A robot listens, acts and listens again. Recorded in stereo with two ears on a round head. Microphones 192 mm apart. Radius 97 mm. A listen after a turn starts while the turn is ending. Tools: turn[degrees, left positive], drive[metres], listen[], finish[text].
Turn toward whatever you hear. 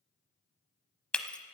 Action: turn[30]
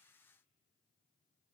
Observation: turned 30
Action: listen[]
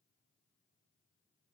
Action: finish[I heard breaking glass, but can't make it out now. It was about 25° right or 145° left.]